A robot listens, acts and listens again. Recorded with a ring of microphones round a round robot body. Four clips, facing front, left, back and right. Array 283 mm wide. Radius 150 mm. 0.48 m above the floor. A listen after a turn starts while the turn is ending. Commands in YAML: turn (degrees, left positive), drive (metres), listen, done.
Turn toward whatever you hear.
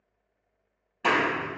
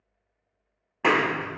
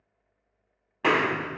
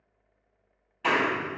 turn: 120
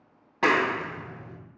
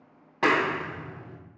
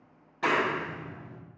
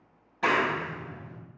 turn: 40
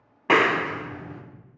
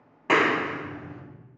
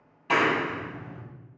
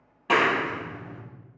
done: "Facing the clap."